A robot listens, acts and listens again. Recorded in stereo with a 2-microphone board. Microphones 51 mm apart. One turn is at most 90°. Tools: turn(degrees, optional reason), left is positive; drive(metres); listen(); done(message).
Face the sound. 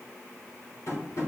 turn(degrees=70, reason="The tapping: about 70° left or 110° left.")
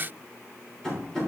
turn(degrees=15, reason="So it is at 15° left.")
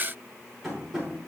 done("Found it: tapping, straight ahead.")